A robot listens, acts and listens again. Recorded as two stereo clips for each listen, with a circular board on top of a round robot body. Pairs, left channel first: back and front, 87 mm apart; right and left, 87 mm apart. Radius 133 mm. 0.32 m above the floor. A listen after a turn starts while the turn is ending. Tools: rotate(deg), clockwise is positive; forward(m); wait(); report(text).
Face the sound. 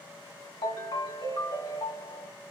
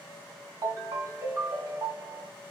rotate(-145)
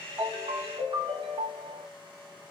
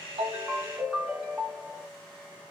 report("Facing the ringtone, 1 to 2 m away.")